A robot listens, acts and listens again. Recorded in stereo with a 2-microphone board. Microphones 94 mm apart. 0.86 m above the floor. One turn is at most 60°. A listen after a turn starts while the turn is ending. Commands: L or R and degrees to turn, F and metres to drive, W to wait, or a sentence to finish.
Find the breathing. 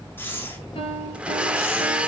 L20
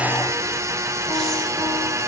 W
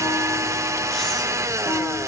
W
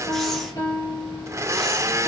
I heard breathing, but can't make it out now. It was about straight ahead or 140° left.